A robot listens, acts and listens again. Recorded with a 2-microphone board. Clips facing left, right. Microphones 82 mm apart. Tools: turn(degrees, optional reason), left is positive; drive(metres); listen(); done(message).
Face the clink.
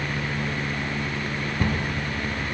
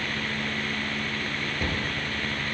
listen()
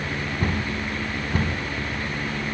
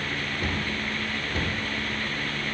listen()
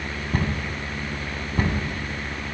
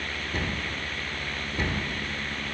done("I can't make out a clink to turn to.")